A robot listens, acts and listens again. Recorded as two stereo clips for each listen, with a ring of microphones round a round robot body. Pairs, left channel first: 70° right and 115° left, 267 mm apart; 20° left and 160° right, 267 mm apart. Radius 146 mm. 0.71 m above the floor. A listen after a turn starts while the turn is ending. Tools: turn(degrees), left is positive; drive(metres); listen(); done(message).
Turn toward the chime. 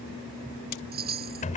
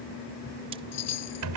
turn(degrees=55)
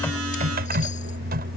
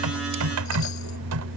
listen()
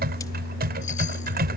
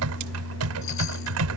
listen()
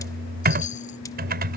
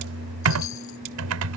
done("Facing where the chime came from. I can't hear it now.")